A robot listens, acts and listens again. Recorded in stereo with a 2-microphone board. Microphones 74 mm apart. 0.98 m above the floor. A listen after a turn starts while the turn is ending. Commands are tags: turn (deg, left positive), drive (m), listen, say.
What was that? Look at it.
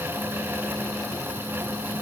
<listen/>
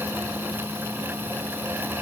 <listen/>
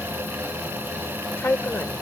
<turn deg="30"/>
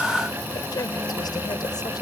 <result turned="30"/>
<listen/>
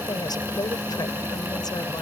<listen/>
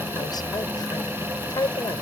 <turn deg="110"/>
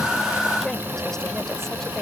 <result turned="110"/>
<listen/>
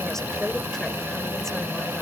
<listen/>
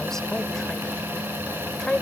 <say>Facing the woman speaking.</say>